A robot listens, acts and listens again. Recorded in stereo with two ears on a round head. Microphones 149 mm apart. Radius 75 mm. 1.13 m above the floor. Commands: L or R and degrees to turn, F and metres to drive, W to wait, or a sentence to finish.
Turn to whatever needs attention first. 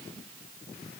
W
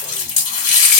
W
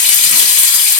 I can't make out anything urgent to turn to.